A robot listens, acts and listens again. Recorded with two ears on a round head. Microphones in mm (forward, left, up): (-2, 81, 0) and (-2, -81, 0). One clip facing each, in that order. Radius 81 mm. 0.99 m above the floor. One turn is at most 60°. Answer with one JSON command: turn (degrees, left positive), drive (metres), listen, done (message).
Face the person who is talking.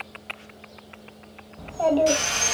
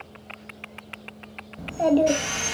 {"turn": -20}
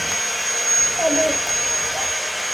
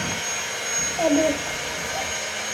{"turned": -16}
{"listen": true}
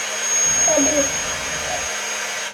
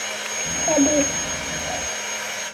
{"listen": true}
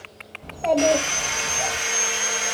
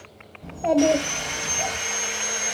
{"done": "Facing the child speaking."}